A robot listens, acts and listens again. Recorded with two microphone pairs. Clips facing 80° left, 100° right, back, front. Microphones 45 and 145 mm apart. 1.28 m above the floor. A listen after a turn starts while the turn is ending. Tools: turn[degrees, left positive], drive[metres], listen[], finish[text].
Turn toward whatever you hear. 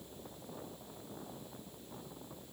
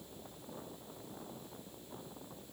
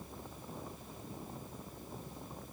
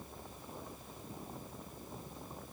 Action: listen[]
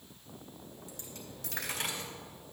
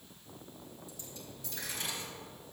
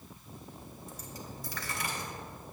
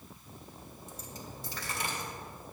Thought: The dropped coin: 60° left.
Action: turn[60]
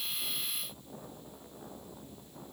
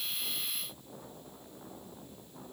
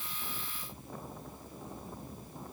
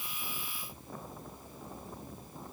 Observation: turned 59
Action: finish[Facing where the dropped coin came from. I can't hear it now.]